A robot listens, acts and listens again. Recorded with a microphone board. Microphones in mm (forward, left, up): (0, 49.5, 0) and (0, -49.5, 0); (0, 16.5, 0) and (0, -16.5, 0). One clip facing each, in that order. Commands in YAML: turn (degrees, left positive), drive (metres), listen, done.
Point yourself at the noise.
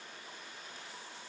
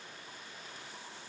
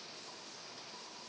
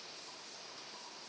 listen: true
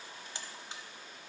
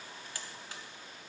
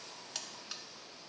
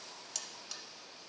turn: 25
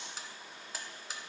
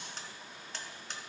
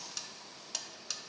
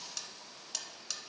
done: "Facing the buzzer, under 1 m away."